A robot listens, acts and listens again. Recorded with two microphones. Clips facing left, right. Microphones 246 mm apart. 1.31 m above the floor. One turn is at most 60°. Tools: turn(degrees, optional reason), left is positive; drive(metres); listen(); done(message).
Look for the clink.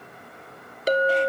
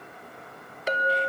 turn(degrees=40, reason="The clink: about 40° left or 140° left.")
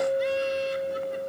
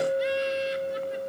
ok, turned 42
done("Found it: a clink, straight ahead, 1 to 2 m away.")